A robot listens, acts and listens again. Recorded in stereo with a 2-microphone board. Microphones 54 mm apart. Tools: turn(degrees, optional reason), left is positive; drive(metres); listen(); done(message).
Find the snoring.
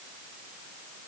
listen()
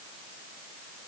listen()
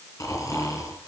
turn(degrees=90)
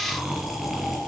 done("Found it: snoring, straight ahead.")